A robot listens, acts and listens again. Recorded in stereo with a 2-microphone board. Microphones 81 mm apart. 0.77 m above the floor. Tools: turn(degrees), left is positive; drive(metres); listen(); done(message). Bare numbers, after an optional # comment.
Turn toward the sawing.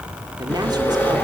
# The sawing: about 25° left or 155° left.
turn(25)
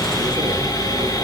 # So it is at 130° left.
turn(130)
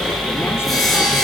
done("Found it: sawing, straight ahead.")